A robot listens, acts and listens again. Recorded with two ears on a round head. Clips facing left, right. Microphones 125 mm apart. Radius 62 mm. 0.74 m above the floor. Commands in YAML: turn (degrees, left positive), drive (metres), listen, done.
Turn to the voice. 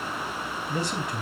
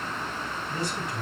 turn: 60
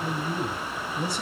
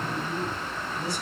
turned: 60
turn: 60
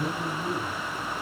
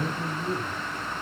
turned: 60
done: "Facing the man speaking, over 4 m away."